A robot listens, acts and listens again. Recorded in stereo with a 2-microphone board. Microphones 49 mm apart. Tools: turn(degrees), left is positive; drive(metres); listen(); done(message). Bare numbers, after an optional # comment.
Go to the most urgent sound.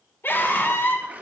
# The scream: about 55° left or 125° left.
turn(55)
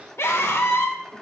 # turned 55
# So it is at 70° left.
turn(70)
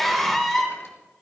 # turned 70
drive(1.0)
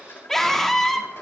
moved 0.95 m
drive(1.0)
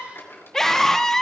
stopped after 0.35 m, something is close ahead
# The scream is now 10° left.
turn(10)
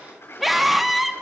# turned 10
done("I am next to the scream.")